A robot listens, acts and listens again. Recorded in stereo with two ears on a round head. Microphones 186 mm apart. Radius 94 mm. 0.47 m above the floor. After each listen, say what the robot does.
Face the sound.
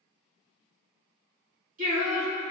Turn 30° right.
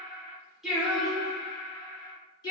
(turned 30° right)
Turn 20° left.
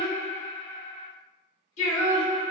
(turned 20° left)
Turn 40° left.
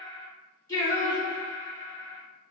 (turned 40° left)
Turn 15° left.
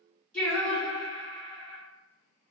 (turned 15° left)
Facing the singing, 1 to 2 m away.